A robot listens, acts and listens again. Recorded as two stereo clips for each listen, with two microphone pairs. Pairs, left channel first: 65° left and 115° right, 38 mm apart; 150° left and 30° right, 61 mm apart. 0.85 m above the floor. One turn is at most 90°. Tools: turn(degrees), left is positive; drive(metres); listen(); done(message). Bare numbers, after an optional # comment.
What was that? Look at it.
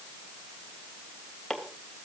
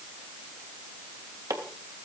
# The chopping: 20° right.
turn(-20)
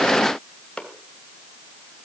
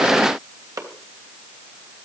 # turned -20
done("Found it: chopping, straight ahead.")